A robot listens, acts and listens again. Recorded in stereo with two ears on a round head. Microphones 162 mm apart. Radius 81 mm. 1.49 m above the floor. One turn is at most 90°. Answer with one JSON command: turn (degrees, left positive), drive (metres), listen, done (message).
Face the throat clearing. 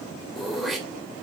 {"turn": 30}
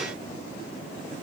{"listen": true}
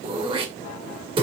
{"turn": -30}
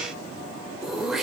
{"done": "Found it: throat clearing, straight ahead."}